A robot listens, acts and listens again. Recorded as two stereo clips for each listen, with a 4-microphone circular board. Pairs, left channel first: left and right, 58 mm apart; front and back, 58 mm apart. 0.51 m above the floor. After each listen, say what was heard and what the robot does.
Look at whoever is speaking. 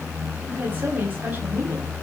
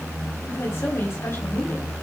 The woman speaking: 35° right. Turn 35° right.
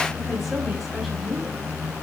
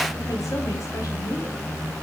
Found it: a woman speaking, straight ahead, 2 to 4 m away.